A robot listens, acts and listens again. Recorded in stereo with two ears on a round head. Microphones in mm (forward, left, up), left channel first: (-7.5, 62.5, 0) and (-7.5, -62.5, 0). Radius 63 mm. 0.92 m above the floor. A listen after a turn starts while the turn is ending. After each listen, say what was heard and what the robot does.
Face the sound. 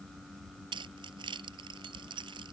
The keys jangling: about 35° right or 145° right. Turn 35° right.
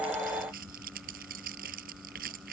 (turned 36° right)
So it is at 110° right. Turn 110° right.
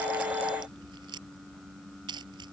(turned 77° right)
The keys jangling is now 30° right. Turn 30° right.
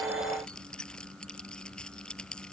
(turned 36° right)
Found it: keys jangling, straight ahead.